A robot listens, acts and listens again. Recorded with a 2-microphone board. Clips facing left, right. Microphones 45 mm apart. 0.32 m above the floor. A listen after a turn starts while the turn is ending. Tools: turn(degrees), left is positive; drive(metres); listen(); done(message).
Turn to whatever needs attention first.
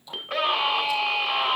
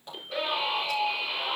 turn(degrees=65)
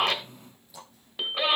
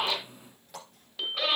turn(degrees=25)
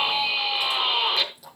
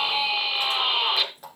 done("Found it: a scream, straight ahead, 2 to 4 m away.")